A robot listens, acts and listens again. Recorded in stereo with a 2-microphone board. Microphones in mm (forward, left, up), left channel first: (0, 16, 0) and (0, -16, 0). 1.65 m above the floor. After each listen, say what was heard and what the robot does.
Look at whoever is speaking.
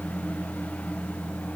Keep listening.
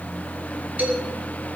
The man speaking: about 55° right or 125° right. Turn 55° right.
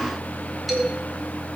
Facing the man speaking, over 4 m away.